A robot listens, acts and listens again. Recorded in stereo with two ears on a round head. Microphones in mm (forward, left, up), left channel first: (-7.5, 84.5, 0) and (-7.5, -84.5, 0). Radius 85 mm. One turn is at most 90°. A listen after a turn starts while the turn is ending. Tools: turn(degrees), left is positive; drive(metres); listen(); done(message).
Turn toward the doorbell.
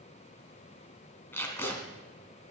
listen()
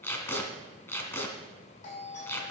turn(degrees=40)
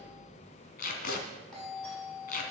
done("Facing the doorbell.")